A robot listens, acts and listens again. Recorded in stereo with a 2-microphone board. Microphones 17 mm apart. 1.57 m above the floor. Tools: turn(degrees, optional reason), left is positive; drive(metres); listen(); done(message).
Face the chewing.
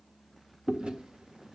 turn(degrees=-75, reason="The chewing: about 75° right or 105° right.")
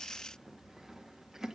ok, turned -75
turn(degrees=-30, reason="So it is at 30° right.")
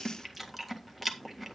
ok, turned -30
done("Found it: chewing, straight ahead.")